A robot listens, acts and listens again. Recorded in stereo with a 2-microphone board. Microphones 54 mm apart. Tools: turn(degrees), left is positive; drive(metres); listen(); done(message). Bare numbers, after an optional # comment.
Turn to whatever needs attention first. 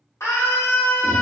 # The scream: about 60° left or 120° left.
turn(60)
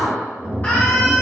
# So it is at 35° left.
turn(35)
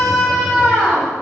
# The scream is now 10° left.
turn(10)
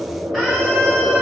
listen()
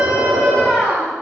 done("Found it: a scream, straight ahead.")